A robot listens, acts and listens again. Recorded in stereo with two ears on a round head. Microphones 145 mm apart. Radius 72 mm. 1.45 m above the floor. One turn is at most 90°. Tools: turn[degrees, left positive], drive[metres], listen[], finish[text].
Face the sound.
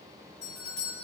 Thought: The doorbell: about 70° left or 110° left.
Action: turn[70]
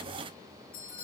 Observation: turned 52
Thought: So it is at 60° left.
Action: turn[60]
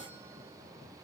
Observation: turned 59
Action: listen[]
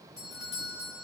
Action: finish[Found it: a doorbell, straight ahead, over 4 m away.]